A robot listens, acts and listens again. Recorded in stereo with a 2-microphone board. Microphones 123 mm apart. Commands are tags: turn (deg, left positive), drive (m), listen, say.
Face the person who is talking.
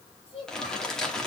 <turn deg="45"/>
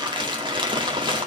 <listen/>
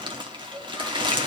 <say>Facing the child speaking.</say>